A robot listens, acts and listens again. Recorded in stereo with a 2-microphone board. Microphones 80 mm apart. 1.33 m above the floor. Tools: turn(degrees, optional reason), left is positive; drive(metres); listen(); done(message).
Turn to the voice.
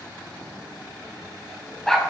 listen()
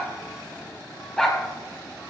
listen()
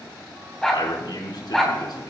turn(degrees=65, reason="The man speaking: about 65° left or 115° left.")
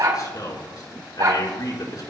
turn(degrees=55, reason="So it is at 55° left.")
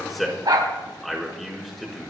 done("Found it: a man speaking, straight ahead.")